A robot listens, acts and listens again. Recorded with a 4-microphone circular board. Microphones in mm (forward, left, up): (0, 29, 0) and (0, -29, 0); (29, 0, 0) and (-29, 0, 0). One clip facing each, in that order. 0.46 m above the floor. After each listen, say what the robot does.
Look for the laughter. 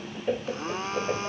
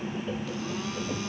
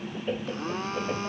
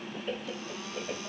Turn 75° left.
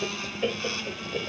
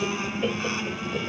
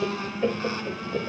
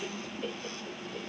Turn 10° left.
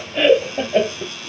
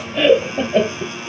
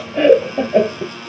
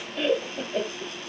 Facing the laughter.